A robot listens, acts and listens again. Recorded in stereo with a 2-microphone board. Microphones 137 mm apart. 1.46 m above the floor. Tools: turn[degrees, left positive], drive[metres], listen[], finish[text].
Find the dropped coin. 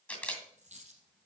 Thought: The dropped coin: about 55° right or 125° right.
Action: turn[-55]
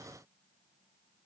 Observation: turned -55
Action: listen[]
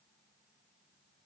Action: finish[I heard a dropped coin, but can't make it out now. It was about straight ahead or 70° right.]